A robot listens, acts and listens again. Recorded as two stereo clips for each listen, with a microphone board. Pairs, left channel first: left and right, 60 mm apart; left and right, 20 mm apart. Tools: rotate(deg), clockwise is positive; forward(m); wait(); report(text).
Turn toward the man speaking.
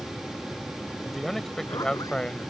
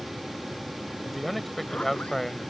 rotate(-20)
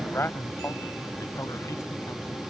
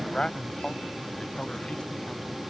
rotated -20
rotate(-135)
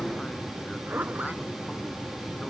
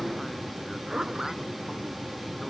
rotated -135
wait()
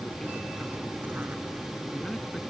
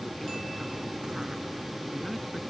wait()
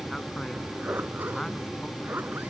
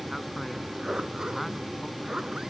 report("I heard a man speaking from this way, but can't make it out now.")